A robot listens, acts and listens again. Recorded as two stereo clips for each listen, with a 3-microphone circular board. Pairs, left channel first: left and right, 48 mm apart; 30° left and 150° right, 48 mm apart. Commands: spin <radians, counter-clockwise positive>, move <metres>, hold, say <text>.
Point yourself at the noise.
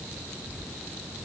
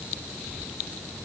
hold
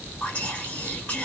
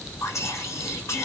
spin 0.52
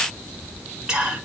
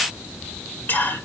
spin -0.17
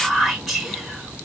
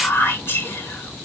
say Facing the whispering, 2 to 4 m away.